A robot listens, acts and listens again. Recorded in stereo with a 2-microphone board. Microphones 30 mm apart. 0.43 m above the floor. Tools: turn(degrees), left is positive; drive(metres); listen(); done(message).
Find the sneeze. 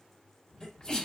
turn(degrees=25)
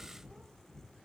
listen()
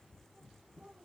done("I heard a sneeze, but can't make it out now. It was about straight ahead or 130° left.")